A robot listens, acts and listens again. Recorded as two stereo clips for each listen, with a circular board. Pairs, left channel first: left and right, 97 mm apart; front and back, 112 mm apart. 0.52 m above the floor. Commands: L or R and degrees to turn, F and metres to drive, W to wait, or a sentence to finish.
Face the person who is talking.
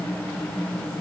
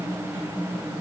W
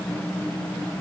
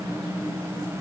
W
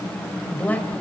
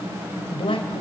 L20
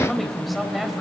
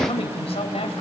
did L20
Facing the man speaking.